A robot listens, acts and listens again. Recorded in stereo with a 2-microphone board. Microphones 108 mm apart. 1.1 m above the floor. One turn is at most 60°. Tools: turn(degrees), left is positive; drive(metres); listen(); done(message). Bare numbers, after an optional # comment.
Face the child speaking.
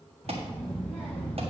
# The child speaking: about 15° left or 165° left.
turn(15)
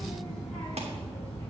turn(30)
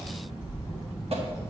done("Facing the child speaking.")